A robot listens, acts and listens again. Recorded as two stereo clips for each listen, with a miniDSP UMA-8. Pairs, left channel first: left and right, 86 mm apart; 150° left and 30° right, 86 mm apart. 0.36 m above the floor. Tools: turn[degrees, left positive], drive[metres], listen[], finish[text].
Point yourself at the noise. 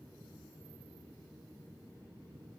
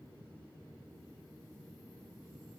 Action: listen[]
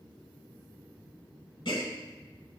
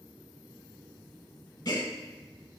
Thought: The gasp: 110° left.
Action: turn[110]
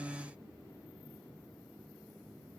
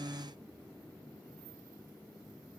Action: finish[Facing where the gasp came from. I can't hear it now.]